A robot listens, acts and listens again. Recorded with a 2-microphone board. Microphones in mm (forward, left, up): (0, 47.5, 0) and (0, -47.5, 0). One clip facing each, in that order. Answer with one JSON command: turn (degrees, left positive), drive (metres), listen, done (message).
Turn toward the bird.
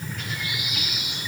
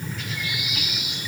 {"turn": 55}
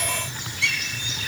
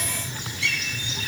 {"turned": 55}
{"turn": 65}
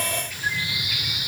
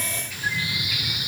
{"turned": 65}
{"done": "Found it: a bird, straight ahead, over 4 m away."}